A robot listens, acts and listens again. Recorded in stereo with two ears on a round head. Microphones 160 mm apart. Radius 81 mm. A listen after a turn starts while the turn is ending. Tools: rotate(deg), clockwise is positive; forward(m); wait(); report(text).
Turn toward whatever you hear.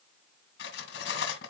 rotate(-90)
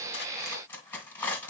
rotate(-10)
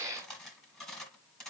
report("Facing the cutlery clinking.")